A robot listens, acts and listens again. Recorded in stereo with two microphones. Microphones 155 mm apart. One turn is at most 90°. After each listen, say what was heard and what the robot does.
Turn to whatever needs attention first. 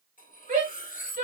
The shout: about 70° right or 110° right. Turn 70° right.
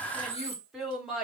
Found it: a shout, straight ahead, 2 to 4 m away.